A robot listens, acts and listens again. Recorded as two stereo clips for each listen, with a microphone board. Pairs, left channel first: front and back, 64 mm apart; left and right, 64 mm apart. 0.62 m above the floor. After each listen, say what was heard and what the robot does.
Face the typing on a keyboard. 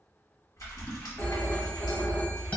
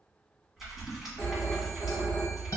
Found it: typing on a keyboard, straight ahead, 1 to 2 m away.